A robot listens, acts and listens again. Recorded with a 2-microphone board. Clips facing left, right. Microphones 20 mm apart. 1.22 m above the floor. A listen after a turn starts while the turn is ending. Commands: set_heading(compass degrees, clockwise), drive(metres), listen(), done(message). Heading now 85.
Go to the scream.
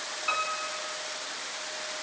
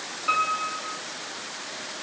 listen()
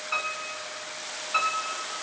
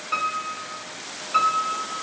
listen()
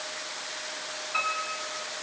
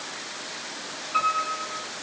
done("I can't make out a scream to turn to.")